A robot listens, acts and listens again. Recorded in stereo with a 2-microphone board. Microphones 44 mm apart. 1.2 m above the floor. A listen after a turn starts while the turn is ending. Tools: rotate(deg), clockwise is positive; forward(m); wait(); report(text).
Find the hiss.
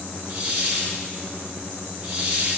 rotate(35)
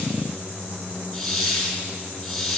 report("Facing the hiss.")